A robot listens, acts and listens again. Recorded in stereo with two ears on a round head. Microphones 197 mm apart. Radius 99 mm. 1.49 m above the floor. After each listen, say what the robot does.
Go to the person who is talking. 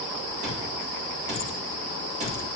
Keep listening.
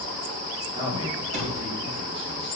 Turn 30° right.
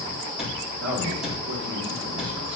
Turn 125° right.
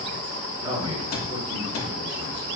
Turn 20° right.
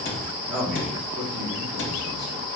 Drive 1.0 m forward.
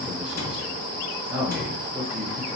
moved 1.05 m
Drive 1.0 m forward.
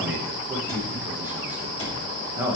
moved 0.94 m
Turn 10° right.
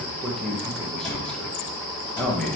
Drive 1.0 m forward.
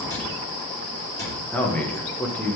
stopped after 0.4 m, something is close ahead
I am next to the man speaking.